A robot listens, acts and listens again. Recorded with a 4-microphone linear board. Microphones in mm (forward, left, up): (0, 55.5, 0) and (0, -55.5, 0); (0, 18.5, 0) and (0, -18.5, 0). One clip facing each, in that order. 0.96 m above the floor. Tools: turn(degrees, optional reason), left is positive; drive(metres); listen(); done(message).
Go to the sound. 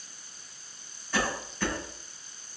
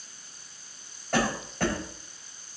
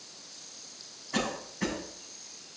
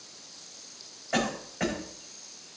turn(degrees=-55, reason="The cough: about 55° right or 125° right.")
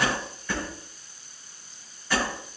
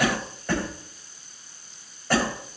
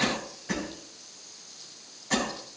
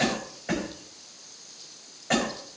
turn(degrees=-65, reason="So it is at 65° right.")
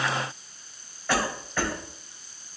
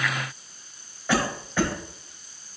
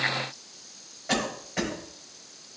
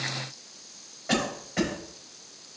turn(degrees=-15, reason="The cough is now 15° right.")
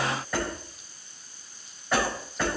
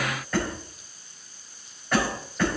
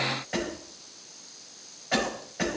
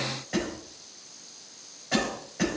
drive(metres=1.0)
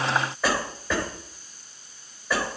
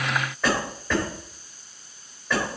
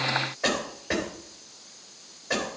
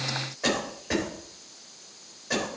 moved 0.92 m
drive(metres=1.0)
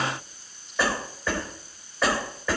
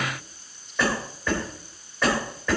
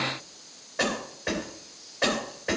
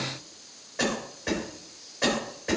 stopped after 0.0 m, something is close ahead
done("Something is in my way. I am facing the cough but have not reached it.")